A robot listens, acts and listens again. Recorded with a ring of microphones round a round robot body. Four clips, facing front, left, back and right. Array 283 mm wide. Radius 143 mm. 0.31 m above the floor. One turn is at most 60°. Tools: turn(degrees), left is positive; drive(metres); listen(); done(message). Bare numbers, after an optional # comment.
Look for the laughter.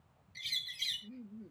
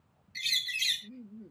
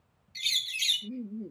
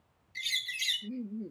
# The laughter: 140° right.
turn(-60)
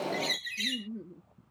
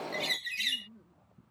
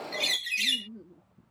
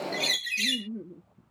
# The laughter is now 80° right.
turn(-60)
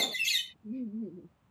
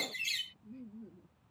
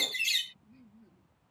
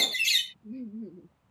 # The laughter is now 35° right.
turn(-35)
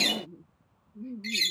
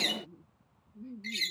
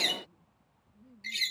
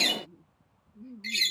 done("Found it: laughter, straight ahead.")